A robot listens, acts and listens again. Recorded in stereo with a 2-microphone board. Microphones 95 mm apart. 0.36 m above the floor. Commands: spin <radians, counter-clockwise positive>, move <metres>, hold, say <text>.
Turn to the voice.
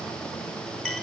hold
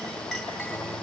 hold
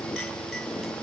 say I can't make out anyone speaking.